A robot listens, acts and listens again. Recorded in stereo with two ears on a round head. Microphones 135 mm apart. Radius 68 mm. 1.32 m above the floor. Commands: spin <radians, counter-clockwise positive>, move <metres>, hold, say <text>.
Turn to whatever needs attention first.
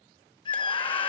spin 0.61
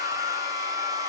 spin 1.92
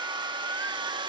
spin -0.26
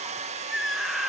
say Facing the scream.